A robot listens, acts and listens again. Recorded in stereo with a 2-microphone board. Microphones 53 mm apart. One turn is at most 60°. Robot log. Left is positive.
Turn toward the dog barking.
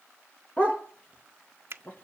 note: The dog barking: about 25° left or 155° left.
cmd yaw +25
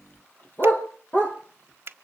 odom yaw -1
note: The dog barking: about 40° left or 140° left.
cmd yaw +40
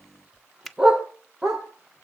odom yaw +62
note: So it is at 15° right.
cmd yaw -15
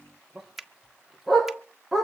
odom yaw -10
end: Found it: a dog barking, straight ahead.